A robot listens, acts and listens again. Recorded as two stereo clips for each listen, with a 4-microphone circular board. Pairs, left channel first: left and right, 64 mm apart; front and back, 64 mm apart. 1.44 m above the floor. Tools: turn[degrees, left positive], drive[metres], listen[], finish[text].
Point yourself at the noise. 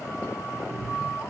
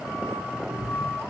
Thought: The cat meowing: 90° left.
Action: turn[90]
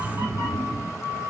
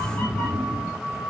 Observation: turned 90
Thought: The cat meowing is now 60° right.
Action: turn[-60]
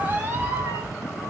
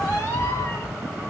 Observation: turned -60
Thought: The cat meowing is now 40° right.
Action: turn[-40]
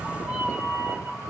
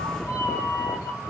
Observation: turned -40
Thought: The cat meowing is now 25° right.
Action: turn[-25]
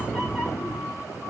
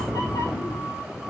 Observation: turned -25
Action: finish[Facing the cat meowing.]